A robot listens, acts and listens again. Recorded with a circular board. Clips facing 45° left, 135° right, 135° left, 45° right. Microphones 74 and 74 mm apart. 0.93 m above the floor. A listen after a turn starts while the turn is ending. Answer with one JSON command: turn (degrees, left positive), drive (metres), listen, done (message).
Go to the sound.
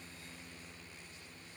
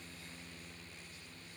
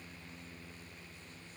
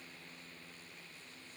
{"listen": true}
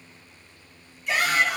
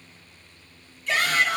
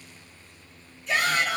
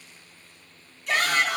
{"turn": -25}
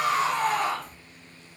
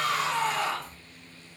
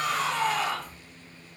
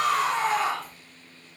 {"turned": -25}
{"turn": 10}
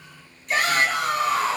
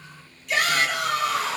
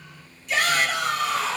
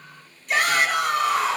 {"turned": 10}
{"drive": 1.0}
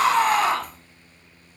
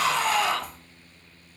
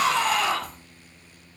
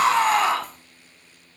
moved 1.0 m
{"drive": 1.0}
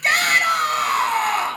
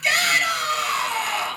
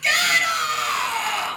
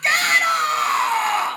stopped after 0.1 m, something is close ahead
{"done": "Arrived at the shout, straight ahead."}